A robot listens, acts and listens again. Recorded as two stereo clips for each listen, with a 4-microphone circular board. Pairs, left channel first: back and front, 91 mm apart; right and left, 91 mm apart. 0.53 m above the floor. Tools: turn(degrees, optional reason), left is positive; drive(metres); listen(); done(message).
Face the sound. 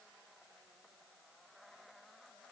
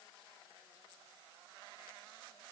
listen()
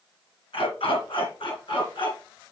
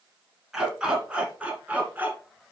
turn(degrees=160, reason="The dog barking: 160° left.")
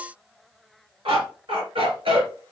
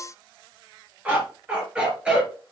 turn(degrees=10, reason="The dog barking is now 10° left.")
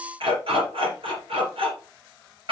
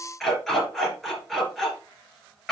done("Found it: a dog barking, straight ahead.")